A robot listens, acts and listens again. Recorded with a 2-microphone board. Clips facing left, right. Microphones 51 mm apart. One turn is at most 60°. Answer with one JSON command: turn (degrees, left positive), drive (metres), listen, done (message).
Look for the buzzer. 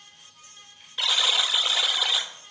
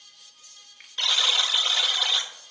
{"turn": 30}
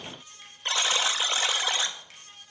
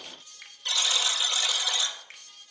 {"turn": 60}
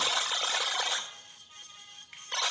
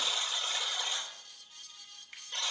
{"turn": 60}
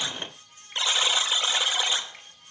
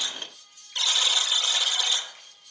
{"turn": 25}
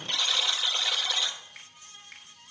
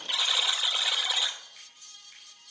{"turn": -10}
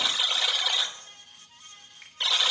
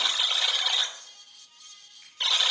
{"done": "Facing the buzzer, under 1 m away."}